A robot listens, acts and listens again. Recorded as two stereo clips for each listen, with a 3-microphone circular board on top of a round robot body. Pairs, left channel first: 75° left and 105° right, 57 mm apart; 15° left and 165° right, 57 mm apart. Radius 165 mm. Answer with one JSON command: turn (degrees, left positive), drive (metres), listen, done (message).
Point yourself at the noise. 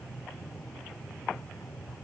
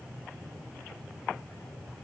{"listen": true}
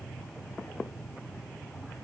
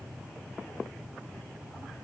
{"listen": true}
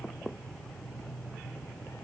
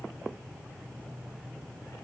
{"done": "I can't make out anything."}